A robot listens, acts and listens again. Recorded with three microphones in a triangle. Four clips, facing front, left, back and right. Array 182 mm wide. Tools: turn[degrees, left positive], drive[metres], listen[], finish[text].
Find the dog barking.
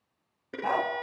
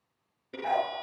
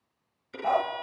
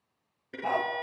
Thought: The dog barking: 15° right.
Action: turn[-15]
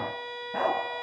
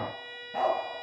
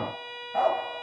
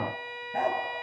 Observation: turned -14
Thought: The dog barking is now 10° left.
Action: turn[10]
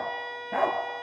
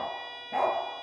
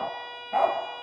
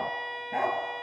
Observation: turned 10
Thought: The dog barking is now 10° left.
Action: turn[10]
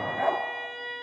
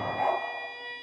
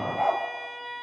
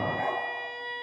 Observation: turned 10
Action: finish[Facing the dog barking.]